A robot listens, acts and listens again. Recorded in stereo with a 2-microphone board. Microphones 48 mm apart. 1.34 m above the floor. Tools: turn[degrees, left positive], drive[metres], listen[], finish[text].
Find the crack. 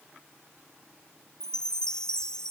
Action: listen[]
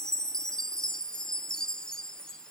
Action: listen[]
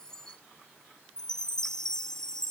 Action: finish[I can't make out a crack to turn to.]